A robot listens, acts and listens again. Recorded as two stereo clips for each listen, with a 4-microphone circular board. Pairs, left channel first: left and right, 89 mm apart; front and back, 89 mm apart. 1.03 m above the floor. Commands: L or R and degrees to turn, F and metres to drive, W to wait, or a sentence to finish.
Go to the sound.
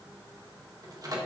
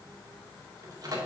R135
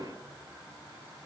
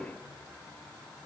W
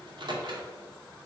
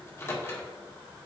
R60
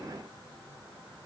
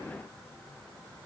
W
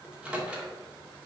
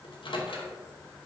R10
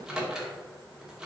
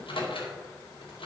F1.0
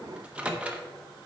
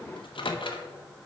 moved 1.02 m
R15
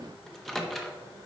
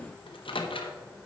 F1.0
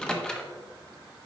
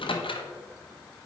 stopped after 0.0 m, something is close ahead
L10
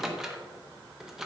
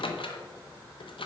I am next to the microwave.